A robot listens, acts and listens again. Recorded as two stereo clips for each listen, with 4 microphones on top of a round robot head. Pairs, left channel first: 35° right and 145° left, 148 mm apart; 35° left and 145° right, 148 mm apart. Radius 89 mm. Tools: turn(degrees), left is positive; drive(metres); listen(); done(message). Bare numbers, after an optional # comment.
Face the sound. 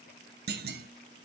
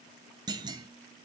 # The clunk: 155° left.
turn(155)
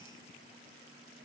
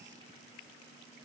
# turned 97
# Nothing new. It was at 55° left.
turn(55)
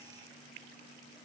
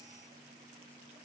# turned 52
done("Facing where the clunk came from. I can't hear it now.")